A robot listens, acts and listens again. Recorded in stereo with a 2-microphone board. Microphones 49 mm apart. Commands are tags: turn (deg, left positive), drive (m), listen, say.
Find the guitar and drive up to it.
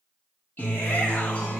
<turn deg="30"/>
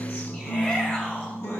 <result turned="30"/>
<turn deg="120"/>
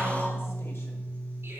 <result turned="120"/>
<turn deg="35"/>
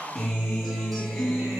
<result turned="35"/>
<drive m="1.0"/>
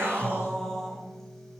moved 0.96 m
<drive m="1.0"/>
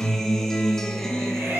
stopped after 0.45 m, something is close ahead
<turn deg="10"/>
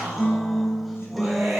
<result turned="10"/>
<say>I am next to the guitar.</say>